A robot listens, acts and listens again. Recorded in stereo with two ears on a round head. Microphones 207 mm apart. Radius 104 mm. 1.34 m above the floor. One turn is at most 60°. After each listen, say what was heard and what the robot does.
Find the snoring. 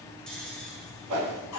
Turn 30° left.
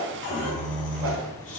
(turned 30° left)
So it is at 145° left. Turn 60° left.
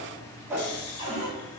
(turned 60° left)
The snoring is now 85° left. Turn 60° left.
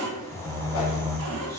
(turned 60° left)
The snoring is now 10° left. Turn 10° left.
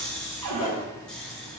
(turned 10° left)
Found it: snoring, straight ahead.